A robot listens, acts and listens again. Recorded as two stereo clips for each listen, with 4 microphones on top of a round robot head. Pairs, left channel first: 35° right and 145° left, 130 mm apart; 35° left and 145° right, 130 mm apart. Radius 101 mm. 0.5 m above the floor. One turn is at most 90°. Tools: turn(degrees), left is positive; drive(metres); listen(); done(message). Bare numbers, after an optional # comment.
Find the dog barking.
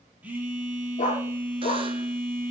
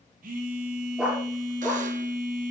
# The dog barking: 65° right.
turn(-65)
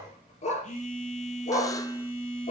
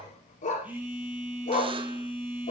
done("Found it: a dog barking, straight ahead.")